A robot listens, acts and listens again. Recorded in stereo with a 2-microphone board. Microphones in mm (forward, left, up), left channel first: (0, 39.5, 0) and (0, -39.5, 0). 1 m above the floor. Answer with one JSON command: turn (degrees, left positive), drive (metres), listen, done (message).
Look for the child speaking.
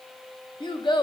{"turn": 70}
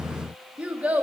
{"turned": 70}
{"turn": -20}
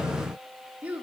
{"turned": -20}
{"turn": -20}
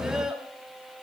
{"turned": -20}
{"turn": -10}
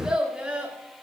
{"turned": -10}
{"turn": -15}
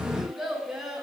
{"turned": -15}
{"done": "Found it: a child speaking, straight ahead."}